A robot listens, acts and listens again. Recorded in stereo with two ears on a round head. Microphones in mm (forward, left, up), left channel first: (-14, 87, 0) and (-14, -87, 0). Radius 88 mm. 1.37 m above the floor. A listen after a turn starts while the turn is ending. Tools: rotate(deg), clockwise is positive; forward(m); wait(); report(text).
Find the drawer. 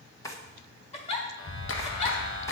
rotate(-15)
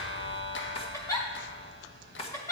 rotate(-150)
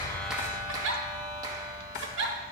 rotate(-60)
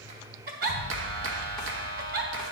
wait()
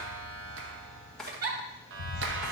report("Found it: a drawer, straight ahead, 1 to 2 m away.")